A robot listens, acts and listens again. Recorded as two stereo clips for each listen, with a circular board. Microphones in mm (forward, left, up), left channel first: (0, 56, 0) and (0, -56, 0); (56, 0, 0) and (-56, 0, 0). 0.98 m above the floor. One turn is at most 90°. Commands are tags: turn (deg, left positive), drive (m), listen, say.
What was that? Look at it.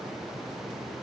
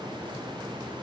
<listen/>
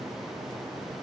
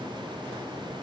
<listen/>
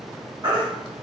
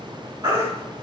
<turn deg="-90"/>
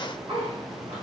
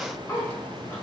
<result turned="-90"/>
<turn deg="-45"/>
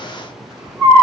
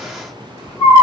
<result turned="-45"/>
<turn deg="-25"/>
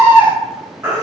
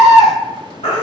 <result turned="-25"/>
<turn deg="-20"/>
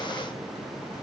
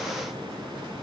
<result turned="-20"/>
<listen/>
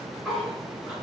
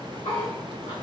<listen/>
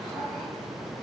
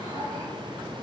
<say>Facing where the baby crying came from. I can't hear it now.</say>